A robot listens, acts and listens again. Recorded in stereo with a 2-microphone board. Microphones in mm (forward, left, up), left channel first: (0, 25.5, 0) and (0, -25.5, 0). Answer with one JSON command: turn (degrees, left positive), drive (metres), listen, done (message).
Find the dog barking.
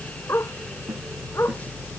{"turn": 65}
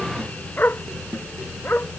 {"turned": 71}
{"turn": 50}
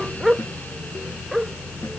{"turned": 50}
{"done": "Facing the dog barking."}